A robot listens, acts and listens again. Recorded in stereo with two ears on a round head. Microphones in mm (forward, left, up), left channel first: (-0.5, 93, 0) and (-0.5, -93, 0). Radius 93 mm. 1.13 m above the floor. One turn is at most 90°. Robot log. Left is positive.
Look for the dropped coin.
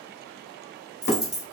cmd yaw +30
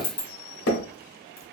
note: So it is at 155° left.
cmd yaw +90
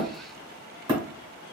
note: Nothing new. It was at 65° left.
cmd yaw +65
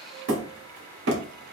end: Facing where the dropped coin came from. I can't hear it now.